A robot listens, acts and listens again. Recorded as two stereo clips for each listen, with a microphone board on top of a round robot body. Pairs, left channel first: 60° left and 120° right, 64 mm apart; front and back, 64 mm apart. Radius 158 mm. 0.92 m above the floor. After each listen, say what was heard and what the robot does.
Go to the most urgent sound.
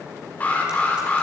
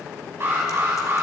The alarm: 125° left. Turn 125° left.
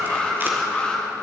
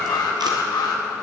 The alarm is now 10° right. Turn 10° right.
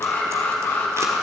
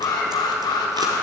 Drive 1.0 m forward.
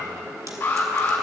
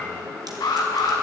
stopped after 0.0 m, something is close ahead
Something is in my way. I am facing the alarm but have not reached it.